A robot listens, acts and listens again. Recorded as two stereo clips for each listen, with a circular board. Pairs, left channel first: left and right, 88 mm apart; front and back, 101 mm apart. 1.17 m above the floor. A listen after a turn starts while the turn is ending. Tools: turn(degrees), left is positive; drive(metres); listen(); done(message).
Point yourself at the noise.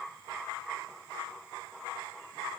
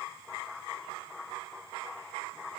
listen()
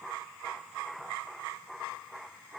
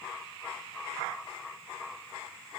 listen()
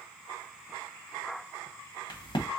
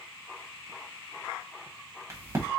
turn(degrees=120)
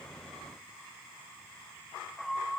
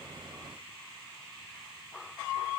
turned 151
turn(degrees=-30)
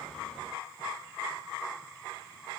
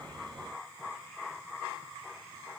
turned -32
done("I heard a crack from this way, but can't make it out now.")